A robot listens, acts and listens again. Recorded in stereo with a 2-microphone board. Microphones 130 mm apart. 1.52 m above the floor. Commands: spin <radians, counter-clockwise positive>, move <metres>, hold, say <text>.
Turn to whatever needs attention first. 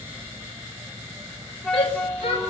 spin 0.79
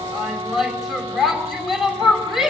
say Found it: a shout, straight ahead, over 4 m away.